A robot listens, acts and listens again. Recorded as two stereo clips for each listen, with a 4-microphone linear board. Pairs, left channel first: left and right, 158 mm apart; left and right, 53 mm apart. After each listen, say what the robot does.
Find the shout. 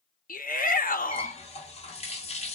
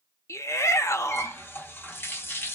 Turn 60° left.
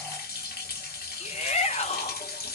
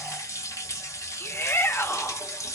Turn 50° left.
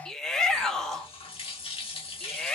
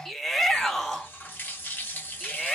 Facing the shout.